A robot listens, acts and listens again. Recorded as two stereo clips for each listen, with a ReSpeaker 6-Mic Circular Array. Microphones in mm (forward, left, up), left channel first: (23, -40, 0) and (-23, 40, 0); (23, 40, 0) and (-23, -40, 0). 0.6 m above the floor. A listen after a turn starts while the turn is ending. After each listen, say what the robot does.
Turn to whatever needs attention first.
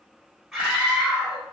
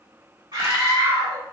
Turn 155° right.
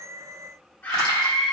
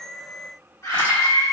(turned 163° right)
Turn 10° left.
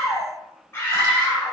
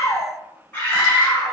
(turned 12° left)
Facing the scream.